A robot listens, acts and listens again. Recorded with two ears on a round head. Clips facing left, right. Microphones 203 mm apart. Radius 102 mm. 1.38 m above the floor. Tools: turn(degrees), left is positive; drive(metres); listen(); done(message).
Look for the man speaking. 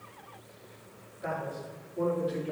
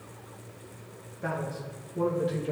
turn(degrees=-70)
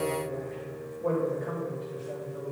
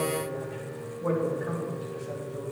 turn(degrees=-20)
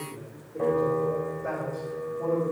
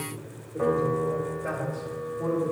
turn(degrees=-10)
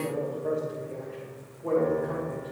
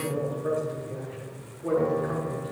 done("Found it: a man speaking, straight ahead.")